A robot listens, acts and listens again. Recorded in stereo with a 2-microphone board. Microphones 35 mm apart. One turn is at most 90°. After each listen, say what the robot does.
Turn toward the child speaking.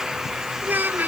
Turn 60° right.
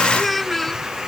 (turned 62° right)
Found it: a child speaking, straight ahead.